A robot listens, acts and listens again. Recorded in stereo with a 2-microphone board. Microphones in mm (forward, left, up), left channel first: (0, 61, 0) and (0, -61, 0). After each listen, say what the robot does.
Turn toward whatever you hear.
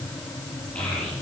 Turn 30° left.
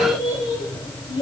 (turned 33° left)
Turn 140° left.
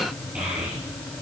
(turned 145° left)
Turn 10° right.
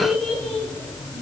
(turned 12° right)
Found it: a child speaking, straight ahead.